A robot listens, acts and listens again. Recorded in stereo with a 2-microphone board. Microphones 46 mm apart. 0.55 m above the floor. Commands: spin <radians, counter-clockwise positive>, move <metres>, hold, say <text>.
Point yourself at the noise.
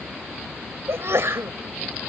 spin -1.22
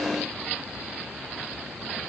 hold
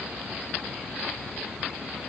say I heard a sneeze, but can't make it out now. It was about straight ahead or 40° right.